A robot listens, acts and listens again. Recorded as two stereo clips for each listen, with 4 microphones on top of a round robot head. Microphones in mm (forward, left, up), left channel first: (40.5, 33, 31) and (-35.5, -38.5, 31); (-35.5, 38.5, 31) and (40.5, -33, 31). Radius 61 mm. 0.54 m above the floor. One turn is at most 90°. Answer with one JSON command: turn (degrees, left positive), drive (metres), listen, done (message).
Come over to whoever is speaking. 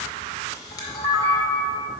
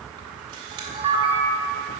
{"listen": true}
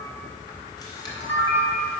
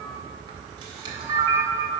{"listen": true}
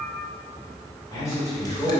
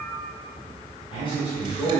{"turn": 90}
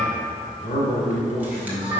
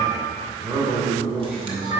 {"turn": 40}
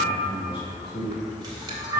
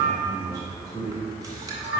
{"turn": 10}
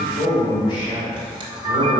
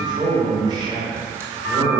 {"drive": 1.0}
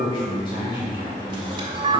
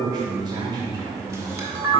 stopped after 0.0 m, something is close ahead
{"done": "Blocked. The man speaking is further on, straight ahead."}